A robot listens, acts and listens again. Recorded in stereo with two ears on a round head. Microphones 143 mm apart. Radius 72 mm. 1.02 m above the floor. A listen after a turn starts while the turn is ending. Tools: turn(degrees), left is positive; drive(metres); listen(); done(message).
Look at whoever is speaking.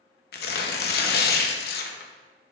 listen()
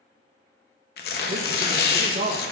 turn(degrees=-50)
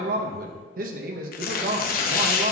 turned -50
turn(degrees=-70)
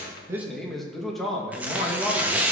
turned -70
done("Facing the man speaking, under 1 m away.")